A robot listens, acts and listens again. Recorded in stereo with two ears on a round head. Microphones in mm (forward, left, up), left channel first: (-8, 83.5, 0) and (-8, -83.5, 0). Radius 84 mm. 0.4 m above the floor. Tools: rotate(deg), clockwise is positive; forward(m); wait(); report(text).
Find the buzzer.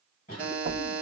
rotate(30)
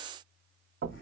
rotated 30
wait()
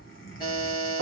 rotate(-25)
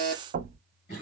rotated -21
report("Found it: a buzzer, straight ahead.")